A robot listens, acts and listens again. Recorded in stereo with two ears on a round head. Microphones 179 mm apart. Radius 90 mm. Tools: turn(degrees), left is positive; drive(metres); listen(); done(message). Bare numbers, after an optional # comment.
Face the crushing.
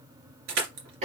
# The crushing: about 75° right or 105° right.
turn(-75)
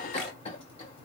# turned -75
listen()
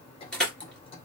done("Found it: crushing, straight ahead, 2 to 4 m away.")